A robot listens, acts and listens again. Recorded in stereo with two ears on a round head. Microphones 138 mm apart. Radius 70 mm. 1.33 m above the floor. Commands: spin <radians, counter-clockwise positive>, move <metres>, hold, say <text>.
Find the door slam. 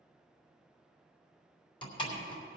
spin 0.61
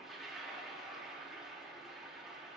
hold
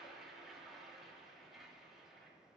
say I heard a door slam, but can't make it out now. It was about straight ahead or 110° left.